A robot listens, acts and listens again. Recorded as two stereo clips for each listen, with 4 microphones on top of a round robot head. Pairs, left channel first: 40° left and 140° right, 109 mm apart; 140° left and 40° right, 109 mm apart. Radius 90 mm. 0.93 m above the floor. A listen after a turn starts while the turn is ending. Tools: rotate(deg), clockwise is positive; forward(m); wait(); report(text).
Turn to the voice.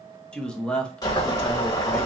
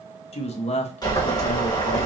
rotate(-120)
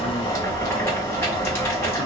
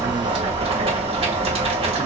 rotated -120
wait()
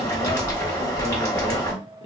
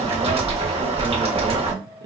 wait()
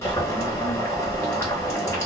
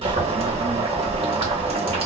report("Facing where the man speaking came from. I can't hear it now.")